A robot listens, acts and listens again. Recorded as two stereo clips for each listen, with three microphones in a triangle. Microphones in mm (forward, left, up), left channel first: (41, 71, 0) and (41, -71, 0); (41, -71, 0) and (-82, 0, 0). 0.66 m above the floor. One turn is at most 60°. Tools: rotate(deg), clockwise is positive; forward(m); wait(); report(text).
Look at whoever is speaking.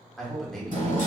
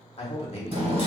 report("Found it: a man speaking, straight ahead.")